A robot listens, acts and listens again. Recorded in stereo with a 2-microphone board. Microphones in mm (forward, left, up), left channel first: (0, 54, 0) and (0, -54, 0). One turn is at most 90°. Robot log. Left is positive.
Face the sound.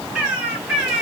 cmd yaw -30
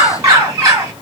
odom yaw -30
note: So it is at 140° right.
cmd yaw -90
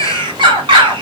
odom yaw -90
note: The bird is now 55° right.
cmd yaw -55
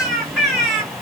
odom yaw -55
end: Found it: a bird, straight ahead.